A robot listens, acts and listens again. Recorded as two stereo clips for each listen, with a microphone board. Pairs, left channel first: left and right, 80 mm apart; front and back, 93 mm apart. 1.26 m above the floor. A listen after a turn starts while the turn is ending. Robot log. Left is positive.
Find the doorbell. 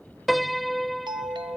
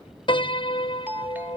note: The doorbell: 110° right.
cmd yaw -110
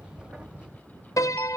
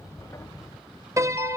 cmd idle
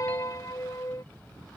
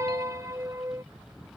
cmd idle
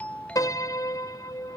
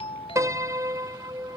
note: The doorbell is now 15° left.
cmd yaw +15
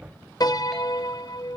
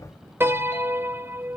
cmd idle
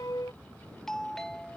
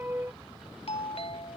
end: Found it: a doorbell, straight ahead.